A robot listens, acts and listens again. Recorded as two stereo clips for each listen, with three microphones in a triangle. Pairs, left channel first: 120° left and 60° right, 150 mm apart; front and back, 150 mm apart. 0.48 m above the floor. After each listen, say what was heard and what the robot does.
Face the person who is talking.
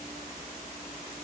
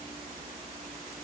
Keep listening.
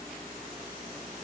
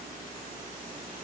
Keep listening.
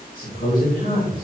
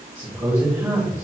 The man speaking: 105° left. Turn 105° left.
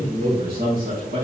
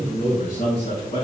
The man speaking is now 45° right. Turn 45° right.
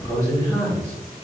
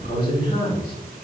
The man speaking is now 10° left. Turn 10° left.
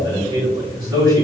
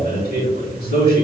Found it: a man speaking, straight ahead, over 4 m away.